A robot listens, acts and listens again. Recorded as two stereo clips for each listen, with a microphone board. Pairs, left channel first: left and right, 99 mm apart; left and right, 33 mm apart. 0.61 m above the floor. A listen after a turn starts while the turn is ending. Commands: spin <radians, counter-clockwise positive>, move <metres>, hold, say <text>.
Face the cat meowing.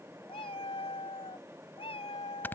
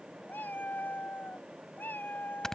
spin 1.57
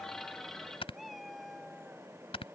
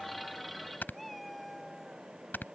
say Found it: a cat meowing, straight ahead.